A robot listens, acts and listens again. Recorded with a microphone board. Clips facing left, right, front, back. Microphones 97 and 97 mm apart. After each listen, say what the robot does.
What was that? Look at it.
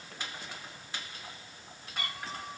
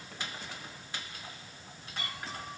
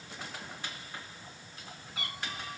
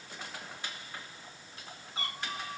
Turn 125° left.
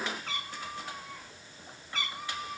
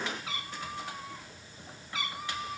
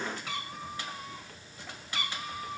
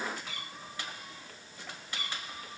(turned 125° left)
Facing the cat meowing.